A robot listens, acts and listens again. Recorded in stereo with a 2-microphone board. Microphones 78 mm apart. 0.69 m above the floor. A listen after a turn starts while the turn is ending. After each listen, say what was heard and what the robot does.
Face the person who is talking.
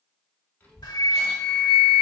The child speaking: about 20° left or 160° left. Turn 20° left.
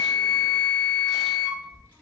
The child speaking: about 15° left or 165° left. Turn 15° left.
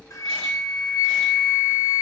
Keep listening.
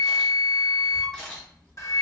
Turn 30° left.
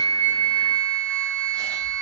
So it is at 135° left. Turn 135° left.
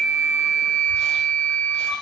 Facing the child speaking, 2 to 4 m away.